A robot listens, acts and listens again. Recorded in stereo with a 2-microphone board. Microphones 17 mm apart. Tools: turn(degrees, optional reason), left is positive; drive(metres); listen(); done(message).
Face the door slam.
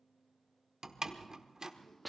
turn(degrees=-40, reason="The door slam: about 40° right or 140° right.")
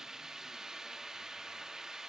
listen()
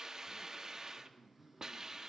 done("I heard a door slam, but can't make it out now. It was about straight ahead or 100° right.")